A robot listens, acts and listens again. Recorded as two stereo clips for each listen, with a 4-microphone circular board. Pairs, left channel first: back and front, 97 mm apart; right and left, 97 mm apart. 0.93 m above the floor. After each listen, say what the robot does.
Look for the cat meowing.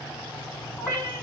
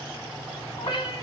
Turn 100° right.
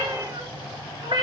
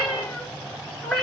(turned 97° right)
Facing the cat meowing.